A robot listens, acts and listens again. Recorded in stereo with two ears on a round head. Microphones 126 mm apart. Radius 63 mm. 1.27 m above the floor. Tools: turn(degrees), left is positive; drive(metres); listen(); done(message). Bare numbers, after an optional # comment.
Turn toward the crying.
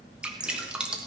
listen()
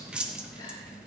listen()
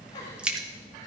done("I can't make out crying, only dripping.")